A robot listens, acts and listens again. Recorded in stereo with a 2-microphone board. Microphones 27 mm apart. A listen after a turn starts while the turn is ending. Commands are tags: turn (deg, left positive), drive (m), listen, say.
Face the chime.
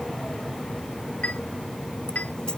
<turn deg="90"/>
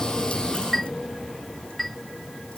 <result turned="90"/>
<say>Found it: a chime, straight ahead.</say>